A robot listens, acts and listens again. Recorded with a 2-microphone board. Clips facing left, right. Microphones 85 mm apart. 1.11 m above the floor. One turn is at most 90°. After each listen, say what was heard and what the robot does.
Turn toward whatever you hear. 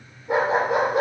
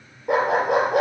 The dog barking: about 70° right or 110° right. Turn 70° right.
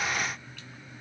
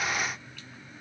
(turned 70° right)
Keep listening.
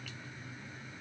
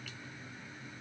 Keep listening.
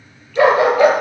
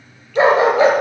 So it is at 20° right. Turn 20° right.
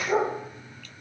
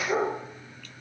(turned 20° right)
Facing the dog barking, over 4 m away.